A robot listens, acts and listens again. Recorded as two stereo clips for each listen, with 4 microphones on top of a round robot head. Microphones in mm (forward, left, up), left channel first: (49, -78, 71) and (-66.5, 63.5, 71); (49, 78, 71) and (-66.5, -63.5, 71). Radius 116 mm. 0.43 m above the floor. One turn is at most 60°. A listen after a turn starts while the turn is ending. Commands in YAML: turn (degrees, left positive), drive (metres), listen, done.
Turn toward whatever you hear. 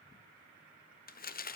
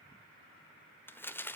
turn: -25
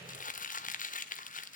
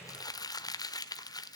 turn: -15
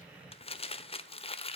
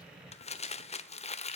done: "Facing the crumpling, 1 to 2 m away."